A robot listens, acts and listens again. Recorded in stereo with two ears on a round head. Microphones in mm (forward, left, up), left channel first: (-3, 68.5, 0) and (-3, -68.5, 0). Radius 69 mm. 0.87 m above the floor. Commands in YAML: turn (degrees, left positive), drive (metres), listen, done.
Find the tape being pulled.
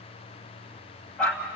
listen: true
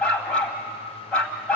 listen: true
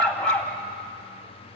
done: "I can't make out tape being pulled, only a dog barking."